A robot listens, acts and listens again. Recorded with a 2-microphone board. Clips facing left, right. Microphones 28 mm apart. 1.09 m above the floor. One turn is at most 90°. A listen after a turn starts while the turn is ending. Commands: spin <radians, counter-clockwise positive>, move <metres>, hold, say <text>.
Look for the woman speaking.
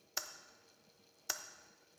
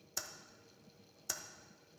hold
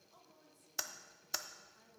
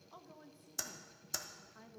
spin -0.70
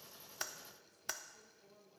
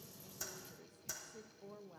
spin -1.57
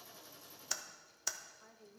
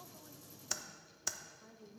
spin 0.26
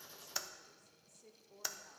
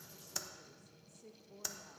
say Facing the woman speaking.